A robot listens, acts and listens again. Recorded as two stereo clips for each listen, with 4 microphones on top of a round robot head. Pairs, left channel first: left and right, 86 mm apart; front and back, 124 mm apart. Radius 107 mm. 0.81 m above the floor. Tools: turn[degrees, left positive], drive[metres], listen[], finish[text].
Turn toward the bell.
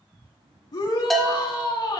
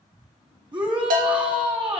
Thought: The bell: straight behind.
Action: turn[180]
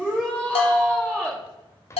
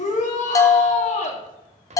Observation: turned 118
Thought: The bell is now 60° left.
Action: turn[60]
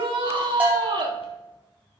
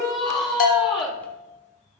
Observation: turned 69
Thought: The bell is now 10° right.
Action: turn[-10]
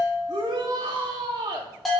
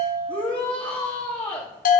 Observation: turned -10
Action: finish[Found it: a bell, straight ahead, 1 to 2 m away.]